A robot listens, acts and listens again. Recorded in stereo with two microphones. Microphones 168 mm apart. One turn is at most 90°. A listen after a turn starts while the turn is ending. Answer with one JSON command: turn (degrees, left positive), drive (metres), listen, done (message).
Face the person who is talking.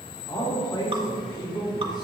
{"turn": 25}
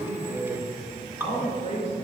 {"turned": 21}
{"turn": 90}
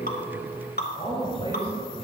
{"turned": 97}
{"turn": 35}
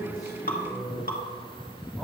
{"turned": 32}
{"done": "Found it: a man speaking, straight ahead."}